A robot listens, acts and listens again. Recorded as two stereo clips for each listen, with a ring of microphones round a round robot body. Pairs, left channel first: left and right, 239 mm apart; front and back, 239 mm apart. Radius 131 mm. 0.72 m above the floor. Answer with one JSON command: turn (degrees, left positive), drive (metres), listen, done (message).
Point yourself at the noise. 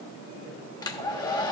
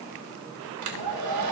{"turn": 165}
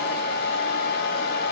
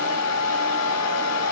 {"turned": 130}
{"turn": 35}
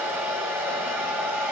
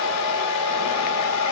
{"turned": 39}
{"done": "Facing the hair dryer."}